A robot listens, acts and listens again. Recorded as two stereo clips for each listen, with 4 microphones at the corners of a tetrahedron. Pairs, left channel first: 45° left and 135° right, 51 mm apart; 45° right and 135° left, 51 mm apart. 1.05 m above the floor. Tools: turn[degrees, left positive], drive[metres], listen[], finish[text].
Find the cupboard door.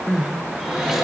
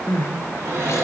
Thought: The cupboard door: 140° left.
Action: turn[140]
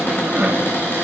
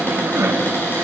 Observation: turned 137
Action: finish[Found it: a cupboard door, straight ahead.]